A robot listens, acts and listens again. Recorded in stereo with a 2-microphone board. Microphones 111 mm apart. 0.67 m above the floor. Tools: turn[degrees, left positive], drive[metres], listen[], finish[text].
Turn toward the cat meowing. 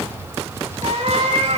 Thought: The cat meowing: about 60° right or 120° right.
Action: turn[-60]
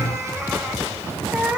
Thought: So it is at 10° right.
Action: turn[-10]
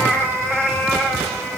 Action: finish[Facing the cat meowing, 2 to 4 m away.]